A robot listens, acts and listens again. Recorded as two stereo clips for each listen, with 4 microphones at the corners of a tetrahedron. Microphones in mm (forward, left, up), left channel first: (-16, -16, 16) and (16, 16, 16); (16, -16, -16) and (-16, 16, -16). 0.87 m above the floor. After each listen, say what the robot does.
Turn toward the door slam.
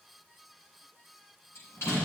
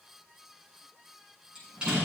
Turn 155° right.
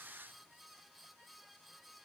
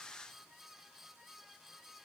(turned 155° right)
Facing where the door slam came from. I can't hear it now.